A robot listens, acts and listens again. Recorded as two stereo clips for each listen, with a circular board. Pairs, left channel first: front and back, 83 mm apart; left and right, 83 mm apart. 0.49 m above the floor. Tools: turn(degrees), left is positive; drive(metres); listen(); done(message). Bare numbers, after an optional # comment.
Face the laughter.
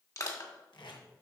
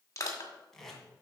listen()
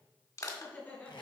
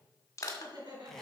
# The laughter: 65° right.
turn(-65)
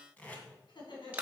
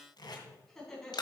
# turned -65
# The laughter is now 10° left.
turn(10)
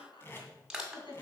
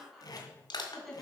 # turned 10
done("Found it: laughter, straight ahead.")